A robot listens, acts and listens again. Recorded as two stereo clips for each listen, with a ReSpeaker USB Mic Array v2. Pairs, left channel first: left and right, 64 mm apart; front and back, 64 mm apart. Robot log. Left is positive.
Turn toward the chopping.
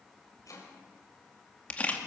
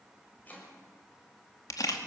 note: The chopping: 65° left.
cmd yaw +65
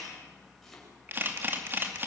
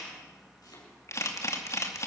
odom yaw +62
end: Found it: chopping, straight ahead, over 4 m away.